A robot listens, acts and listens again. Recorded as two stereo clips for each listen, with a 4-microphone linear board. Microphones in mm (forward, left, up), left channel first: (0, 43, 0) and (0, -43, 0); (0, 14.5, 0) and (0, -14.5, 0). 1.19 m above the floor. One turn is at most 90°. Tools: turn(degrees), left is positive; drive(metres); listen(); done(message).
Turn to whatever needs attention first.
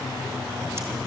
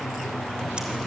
listen()
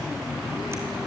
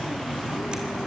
listen()
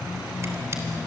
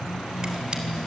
done("I can't make out anything urgent to turn to.")